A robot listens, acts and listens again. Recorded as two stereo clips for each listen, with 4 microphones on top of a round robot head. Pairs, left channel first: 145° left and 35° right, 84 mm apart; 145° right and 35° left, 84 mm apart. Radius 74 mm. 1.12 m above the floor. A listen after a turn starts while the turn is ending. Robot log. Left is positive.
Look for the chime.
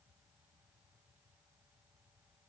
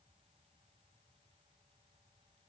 cmd idle
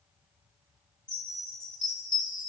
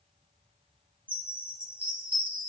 note: The chime: 110° left.
cmd yaw +110
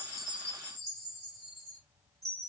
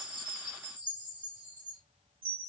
note: The chime is now 20° left.
cmd yaw +20
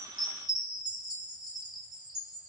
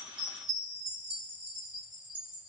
end: Found it: a chime, straight ahead.